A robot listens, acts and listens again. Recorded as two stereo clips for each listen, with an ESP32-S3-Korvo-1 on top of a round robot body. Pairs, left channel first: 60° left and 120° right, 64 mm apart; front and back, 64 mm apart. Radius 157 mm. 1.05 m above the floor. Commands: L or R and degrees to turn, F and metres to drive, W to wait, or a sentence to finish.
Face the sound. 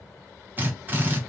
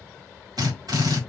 L180
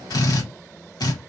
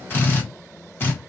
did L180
L55
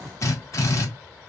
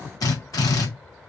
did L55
L20
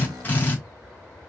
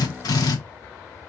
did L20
Facing the drill, 2 to 4 m away.